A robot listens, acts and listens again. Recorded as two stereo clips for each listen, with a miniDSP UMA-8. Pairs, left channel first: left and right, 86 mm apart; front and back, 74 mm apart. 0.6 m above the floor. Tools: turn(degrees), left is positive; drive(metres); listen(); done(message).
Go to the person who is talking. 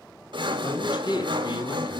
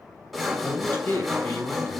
turn(degrees=60)
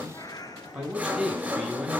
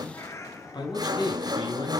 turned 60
turn(degrees=-10)
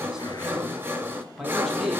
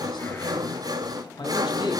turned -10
drive(metres=1.0)
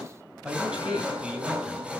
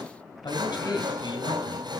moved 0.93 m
turn(degrees=-15)
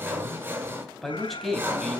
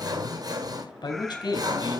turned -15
drive(metres=1.0)
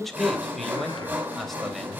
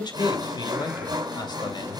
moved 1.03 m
drive(metres=1.0)
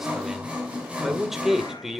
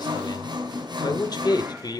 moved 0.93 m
drive(metres=1.0)
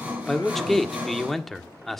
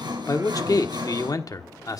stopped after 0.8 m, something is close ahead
done("Arrived at the man speaking, straight ahead.")